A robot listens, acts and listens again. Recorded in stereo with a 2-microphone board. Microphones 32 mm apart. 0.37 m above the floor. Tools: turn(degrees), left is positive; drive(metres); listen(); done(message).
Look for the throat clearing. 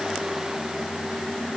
listen()
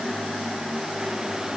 listen()
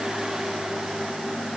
done("I can't make out throat clearing to turn to.")